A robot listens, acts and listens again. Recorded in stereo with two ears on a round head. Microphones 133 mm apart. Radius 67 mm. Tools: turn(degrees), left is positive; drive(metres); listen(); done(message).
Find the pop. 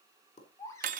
turn(degrees=55)
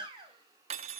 listen()
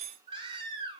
done("I heard a pop, but can't make it out now. It was about straight ahead or 70° left.")